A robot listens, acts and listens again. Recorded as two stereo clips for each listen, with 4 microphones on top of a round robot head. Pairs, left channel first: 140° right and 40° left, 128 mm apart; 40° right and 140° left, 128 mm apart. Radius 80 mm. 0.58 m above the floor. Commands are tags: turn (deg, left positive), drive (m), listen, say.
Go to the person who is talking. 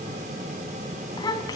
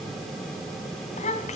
<turn deg="-75"/>
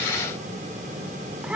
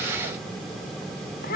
<turn deg="-40"/>
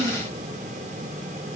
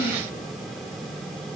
<listen/>
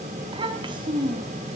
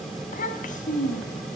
<turn deg="-15"/>
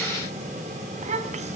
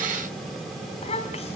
<drive m="1.0"/>
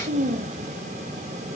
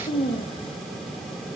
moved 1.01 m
<turn deg="10"/>
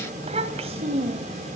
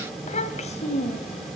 <drive m="1.0"/>
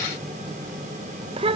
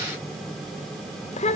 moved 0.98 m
<drive m="1.0"/>
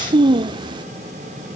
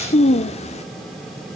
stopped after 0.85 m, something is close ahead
<turn deg="-10"/>
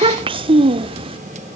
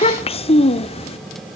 <say>Arrived at the child speaking, straight ahead.</say>